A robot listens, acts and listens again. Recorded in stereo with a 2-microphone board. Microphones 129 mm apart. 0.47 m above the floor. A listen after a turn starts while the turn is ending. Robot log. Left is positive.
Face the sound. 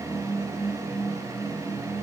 cmd idle
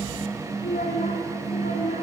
cmd yaw +90
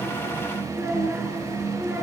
note: So it is at 15° right.
cmd yaw -15
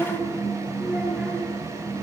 end: Found it: a child speaking, straight ahead, over 4 m away.